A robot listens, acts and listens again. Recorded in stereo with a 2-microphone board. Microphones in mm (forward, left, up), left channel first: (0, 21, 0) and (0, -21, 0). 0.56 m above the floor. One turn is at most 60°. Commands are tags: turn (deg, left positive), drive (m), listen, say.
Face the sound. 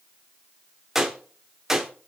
<turn deg="-30"/>
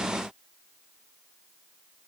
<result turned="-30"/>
<listen/>
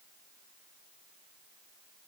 <say>I heard a gunshot, but can't make it out now. It was about 25° left or 145° right.</say>